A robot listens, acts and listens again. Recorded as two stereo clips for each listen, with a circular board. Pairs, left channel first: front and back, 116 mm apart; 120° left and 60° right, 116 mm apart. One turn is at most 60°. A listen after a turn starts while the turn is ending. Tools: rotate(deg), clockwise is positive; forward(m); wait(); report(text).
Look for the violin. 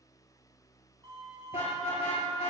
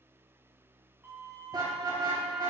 rotate(60)
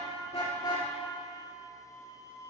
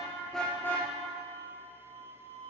rotate(60)
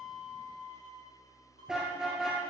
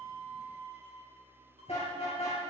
rotate(25)
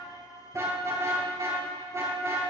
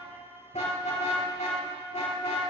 wait()
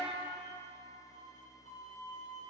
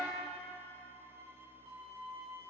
report("Found it: a violin, straight ahead, over 4 m away.")